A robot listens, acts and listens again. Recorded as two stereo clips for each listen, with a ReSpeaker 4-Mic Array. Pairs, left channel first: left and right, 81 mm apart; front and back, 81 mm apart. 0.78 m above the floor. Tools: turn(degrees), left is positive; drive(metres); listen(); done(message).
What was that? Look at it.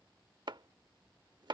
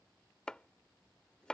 turn(degrees=-80)
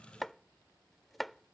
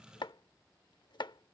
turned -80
done("Found it: chopping, straight ahead.")